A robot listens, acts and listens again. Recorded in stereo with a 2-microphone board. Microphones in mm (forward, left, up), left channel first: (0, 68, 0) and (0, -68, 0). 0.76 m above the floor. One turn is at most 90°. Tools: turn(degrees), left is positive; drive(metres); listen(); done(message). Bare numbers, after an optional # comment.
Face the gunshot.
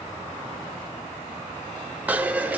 listen()
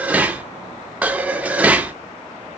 listen()
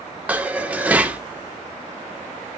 done("I can't make out a gunshot, only dishes clattering.")